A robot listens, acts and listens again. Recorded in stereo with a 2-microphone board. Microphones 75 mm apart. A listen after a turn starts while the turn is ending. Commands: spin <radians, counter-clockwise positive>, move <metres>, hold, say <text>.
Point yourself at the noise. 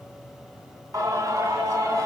spin -0.61
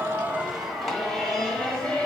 spin 0.26
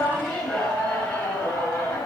spin 0.52
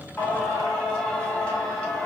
spin 0.26
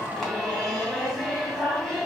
say Found it: singing, straight ahead, 2 to 4 m away.